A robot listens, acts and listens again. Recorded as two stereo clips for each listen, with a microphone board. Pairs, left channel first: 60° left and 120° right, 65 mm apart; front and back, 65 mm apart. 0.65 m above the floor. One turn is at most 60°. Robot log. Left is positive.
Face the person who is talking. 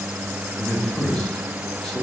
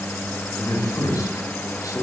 note: The man speaking: 20° right.
cmd yaw -20
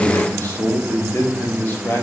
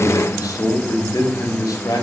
end: Facing the man speaking, 1 to 2 m away.